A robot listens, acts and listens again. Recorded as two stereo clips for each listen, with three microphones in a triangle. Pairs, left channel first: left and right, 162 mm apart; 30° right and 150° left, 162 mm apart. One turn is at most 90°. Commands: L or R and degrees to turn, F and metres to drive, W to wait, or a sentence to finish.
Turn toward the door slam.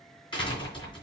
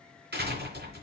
L90
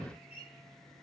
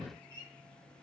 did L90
L60
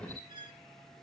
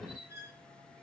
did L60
I heard a door slam from this way, but can't make it out now.